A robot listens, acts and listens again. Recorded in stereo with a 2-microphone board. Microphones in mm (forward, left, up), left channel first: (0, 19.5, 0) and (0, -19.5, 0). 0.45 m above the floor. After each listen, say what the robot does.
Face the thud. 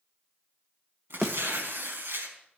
Turn 30° left.
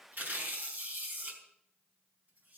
Keep listening.
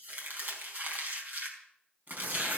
I heard a thud, but can't make it out now. It was about 30° right or 150° left.